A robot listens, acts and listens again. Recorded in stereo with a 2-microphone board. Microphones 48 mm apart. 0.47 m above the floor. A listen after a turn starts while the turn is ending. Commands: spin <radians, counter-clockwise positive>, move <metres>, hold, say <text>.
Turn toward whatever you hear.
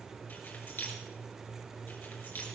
spin 0.87
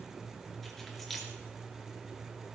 say Found it: keys jangling, straight ahead, over 4 m away.